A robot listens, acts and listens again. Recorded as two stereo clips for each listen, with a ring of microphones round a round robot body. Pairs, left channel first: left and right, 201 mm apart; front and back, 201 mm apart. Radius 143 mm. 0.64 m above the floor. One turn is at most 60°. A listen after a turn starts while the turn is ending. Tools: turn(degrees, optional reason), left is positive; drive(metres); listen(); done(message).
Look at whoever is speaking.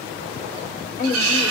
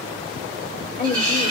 turn(degrees=40, reason="The woman speaking: 40° left.")
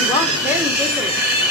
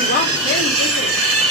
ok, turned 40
listen()
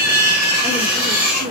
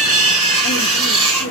turn(degrees=-40, reason="The woman speaking is now 40° right.")
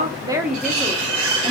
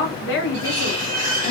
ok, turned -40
turn(degrees=-15, reason="The woman speaking is now 15° right.")
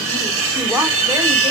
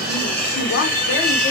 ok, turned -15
listen()
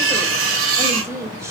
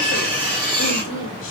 turn(degrees=-15, reason="The woman speaking is now 15° right.")
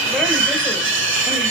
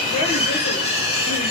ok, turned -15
listen()
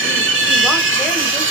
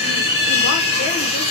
listen()
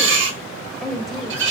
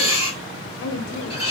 done("Found it: a woman speaking, straight ahead.")